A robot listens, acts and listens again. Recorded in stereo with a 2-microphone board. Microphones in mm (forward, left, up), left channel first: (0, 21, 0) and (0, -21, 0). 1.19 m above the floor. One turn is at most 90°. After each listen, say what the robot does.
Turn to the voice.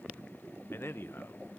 Turn 60° left.
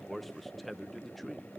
Found it: a man speaking, straight ahead, under 1 m away.